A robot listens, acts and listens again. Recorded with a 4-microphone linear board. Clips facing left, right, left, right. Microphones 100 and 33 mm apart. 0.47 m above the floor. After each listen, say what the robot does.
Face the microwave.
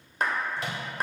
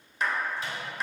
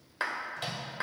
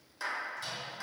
Turn 70° left.
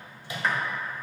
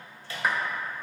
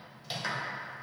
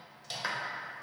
Turn 20° left.
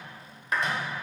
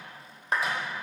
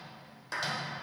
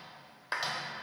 Keep listening.
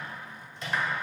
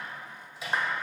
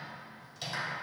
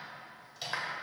Facing the microwave.